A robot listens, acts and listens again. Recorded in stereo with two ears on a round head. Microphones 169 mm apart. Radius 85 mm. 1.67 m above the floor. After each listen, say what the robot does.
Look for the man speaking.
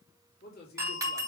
Turn 50° left.
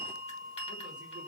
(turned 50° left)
Keep listening.
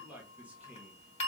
Turn 10° right.
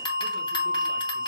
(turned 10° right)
Keep listening.
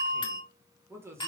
Turn 15° right.
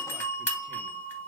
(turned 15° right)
Keep listening.
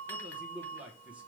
Found it: a man speaking, straight ahead, 1 to 2 m away.